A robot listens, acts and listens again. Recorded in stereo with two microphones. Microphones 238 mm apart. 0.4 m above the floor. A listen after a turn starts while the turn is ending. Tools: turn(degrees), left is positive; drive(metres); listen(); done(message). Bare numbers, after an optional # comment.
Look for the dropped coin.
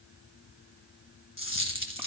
# The dropped coin: about 55° left or 125° left.
turn(55)
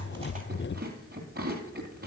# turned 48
listen()
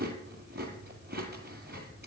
done("I heard a dropped coin, but can't make it out now. It was about 5° left or 80° left.")